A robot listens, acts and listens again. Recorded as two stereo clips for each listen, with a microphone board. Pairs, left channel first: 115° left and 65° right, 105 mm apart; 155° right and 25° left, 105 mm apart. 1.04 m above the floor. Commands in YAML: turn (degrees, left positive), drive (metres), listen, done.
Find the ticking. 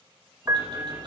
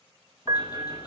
turn: -105
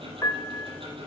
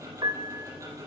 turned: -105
turn: -35
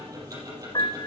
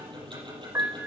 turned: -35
turn: -15
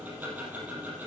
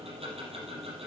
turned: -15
done: "Facing the ticking, over 4 m away."